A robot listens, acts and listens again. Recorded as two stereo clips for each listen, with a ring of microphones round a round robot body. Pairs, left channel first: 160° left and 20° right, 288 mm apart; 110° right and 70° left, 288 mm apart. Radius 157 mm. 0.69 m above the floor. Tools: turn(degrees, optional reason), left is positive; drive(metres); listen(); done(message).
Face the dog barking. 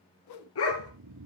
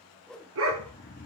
turn(degrees=115, reason="The dog barking: 115° left.")
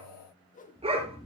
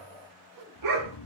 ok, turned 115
turn(degrees=50, reason="The dog barking is now 50° left.")
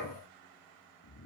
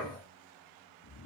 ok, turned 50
done("Found it: a dog barking, straight ahead, 2 to 4 m away.")